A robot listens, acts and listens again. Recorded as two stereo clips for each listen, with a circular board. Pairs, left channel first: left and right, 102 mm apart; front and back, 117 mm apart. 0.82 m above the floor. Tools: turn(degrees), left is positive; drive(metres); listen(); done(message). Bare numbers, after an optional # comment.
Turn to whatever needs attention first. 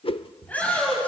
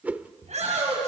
# The shout: 165° left.
turn(165)
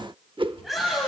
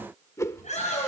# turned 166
done("Facing the shout, over 4 m away.")